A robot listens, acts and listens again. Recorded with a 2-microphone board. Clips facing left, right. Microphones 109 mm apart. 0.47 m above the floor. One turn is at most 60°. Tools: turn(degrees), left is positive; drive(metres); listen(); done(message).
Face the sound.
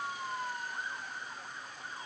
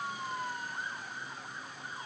listen()
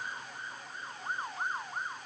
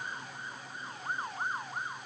listen()
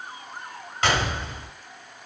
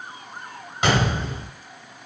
turn(degrees=-30)
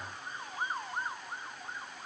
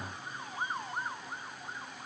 listen()
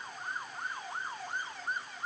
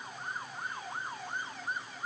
done("I heard a gunshot, but can't make it out now. It was about 15° left or 135° right.")